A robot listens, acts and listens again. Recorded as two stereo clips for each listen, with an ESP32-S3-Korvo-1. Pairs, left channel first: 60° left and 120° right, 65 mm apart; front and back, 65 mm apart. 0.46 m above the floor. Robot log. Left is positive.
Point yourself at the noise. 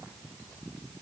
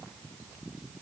cmd idle
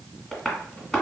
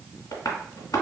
note: The tapping: 15° right.
cmd yaw -15
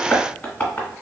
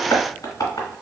end: Facing the tapping.